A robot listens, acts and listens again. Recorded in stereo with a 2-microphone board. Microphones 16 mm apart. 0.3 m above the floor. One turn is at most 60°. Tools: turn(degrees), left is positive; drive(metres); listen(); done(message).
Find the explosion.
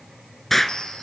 turn(degrees=25)
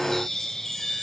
listen()
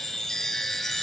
done("I heard an explosion, but can't make it out now. It was about straight ahead or 130° left.")